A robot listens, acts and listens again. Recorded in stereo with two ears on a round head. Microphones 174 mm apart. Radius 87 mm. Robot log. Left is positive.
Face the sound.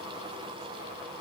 cmd idle
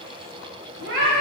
note: The cat meowing: about 70° right or 110° right.
cmd yaw -70
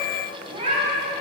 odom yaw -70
note: So it is at 35° right.
cmd yaw -35
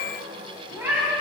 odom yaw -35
note: The cat meowing is now 10° right.
cmd yaw -10
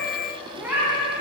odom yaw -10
note: The cat meowing is now 10° right.
cmd yaw -10
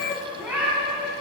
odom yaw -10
end: Facing the cat meowing.